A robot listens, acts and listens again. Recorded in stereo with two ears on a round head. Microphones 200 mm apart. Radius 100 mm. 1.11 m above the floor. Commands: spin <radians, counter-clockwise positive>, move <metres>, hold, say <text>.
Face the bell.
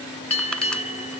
spin 0.52
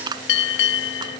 spin 2.18
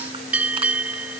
say Facing the bell.